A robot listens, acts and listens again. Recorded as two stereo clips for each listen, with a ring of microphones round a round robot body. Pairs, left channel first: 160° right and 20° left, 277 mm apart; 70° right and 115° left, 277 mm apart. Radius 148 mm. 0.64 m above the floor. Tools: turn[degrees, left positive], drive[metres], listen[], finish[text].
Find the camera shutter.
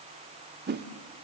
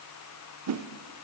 Action: listen[]
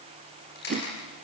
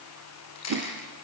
Thought: The camera shutter: 105° right.
Action: turn[-105]
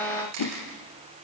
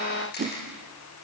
Thought: The camera shutter is now 10° right.
Action: turn[-10]
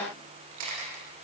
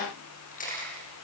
Action: finish[Found it: a camera shutter, straight ahead.]